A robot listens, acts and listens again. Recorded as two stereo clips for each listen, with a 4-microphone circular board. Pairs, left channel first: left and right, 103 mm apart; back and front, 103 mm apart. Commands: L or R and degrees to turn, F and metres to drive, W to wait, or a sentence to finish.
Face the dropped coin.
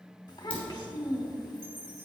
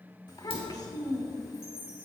L165
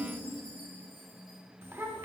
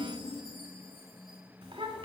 Facing where the dropped coin came from. I can't hear it now.